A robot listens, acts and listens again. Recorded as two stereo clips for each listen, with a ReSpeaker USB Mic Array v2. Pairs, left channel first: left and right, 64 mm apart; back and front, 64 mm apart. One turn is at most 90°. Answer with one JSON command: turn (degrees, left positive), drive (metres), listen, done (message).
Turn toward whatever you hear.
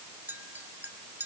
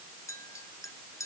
{"turn": -90}
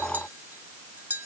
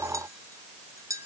{"turn": -30}
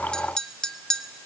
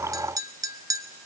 {"turn": 10}
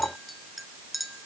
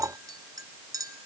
{"done": "Found it: a clink, straight ahead."}